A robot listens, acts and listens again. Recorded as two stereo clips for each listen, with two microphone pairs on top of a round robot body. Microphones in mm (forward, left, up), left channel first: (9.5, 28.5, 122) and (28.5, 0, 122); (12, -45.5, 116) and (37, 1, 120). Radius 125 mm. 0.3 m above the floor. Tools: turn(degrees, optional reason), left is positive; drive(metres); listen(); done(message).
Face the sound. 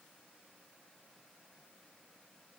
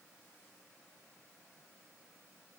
listen()
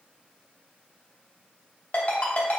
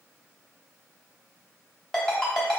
turn(degrees=165, reason="The ringtone: 165° left.")
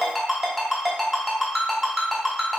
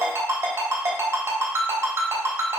turn(degrees=30, reason="The ringtone is now 30° left.")
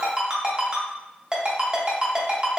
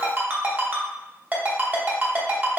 done("Found it: a ringtone, straight ahead.")